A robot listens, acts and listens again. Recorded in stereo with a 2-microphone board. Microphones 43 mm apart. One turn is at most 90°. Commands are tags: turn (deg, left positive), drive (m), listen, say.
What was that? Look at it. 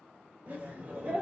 <turn deg="-40"/>
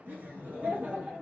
<turn deg="-40"/>
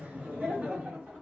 <turn deg="-35"/>
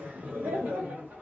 <turn deg="-45"/>
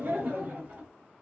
<turn deg="-50"/>
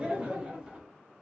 <turn deg="-20"/>
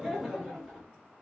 <say>Facing the laughter, 1 to 2 m away.</say>